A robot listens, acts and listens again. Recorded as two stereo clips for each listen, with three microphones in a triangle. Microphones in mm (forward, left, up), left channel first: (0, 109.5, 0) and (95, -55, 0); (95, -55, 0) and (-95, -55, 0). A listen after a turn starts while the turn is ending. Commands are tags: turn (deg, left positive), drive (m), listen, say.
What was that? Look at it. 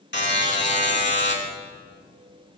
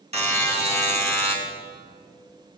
<turn deg="125"/>
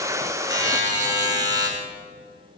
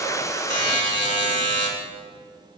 <turn deg="10"/>
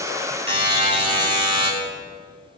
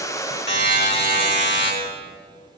<say>Found it: a buzzer, straight ahead.</say>